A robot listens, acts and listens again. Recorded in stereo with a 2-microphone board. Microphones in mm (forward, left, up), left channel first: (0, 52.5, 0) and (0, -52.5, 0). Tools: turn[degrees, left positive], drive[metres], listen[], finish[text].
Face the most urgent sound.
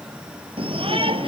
Thought: The shout: about 60° right or 120° right.
Action: turn[-60]
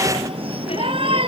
Thought: So it is at 60° right.
Action: turn[-60]
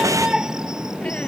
Action: finish[Found it: a shout, straight ahead.]